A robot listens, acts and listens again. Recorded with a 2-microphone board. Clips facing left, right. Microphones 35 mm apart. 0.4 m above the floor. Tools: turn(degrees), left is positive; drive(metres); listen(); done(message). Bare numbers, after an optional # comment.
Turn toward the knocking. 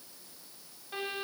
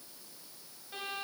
listen()
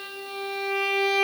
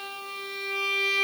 listen()
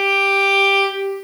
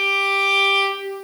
done("I can't make out knocking, only a violin.")